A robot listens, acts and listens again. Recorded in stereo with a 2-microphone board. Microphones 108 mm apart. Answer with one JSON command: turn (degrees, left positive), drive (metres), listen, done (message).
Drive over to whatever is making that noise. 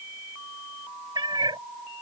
{"turn": -45}
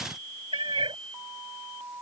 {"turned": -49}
{"turn": -75}
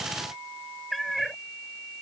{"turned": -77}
{"drive": 1.0}
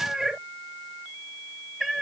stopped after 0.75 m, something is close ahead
{"done": "Arrived at the cat meowing, straight ahead."}